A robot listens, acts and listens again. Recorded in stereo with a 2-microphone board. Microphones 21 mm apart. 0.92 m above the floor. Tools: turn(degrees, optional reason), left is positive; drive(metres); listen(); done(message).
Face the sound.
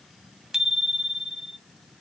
turn(degrees=-20, reason="The bicycle bell: about 20° right or 160° right.")
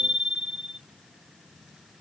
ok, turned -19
turn(degrees=-140, reason="So it is at 140° right.")
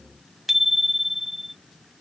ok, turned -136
turn(degrees=-10, reason="The bicycle bell is now 10° right.")
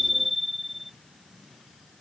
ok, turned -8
done("Found it: a bicycle bell, straight ahead.")